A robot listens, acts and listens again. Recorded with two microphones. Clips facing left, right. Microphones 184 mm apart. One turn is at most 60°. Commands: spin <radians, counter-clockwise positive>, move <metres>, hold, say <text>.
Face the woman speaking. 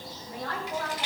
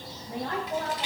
spin -0.35
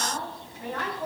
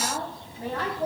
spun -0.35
spin -0.61
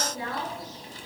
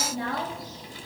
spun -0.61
spin -1.05
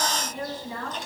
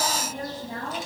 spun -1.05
spin -1.05
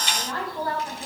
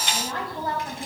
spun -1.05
spin -0.44
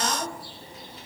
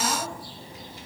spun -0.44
spin -0.17
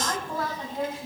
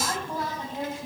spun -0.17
say Facing the woman speaking.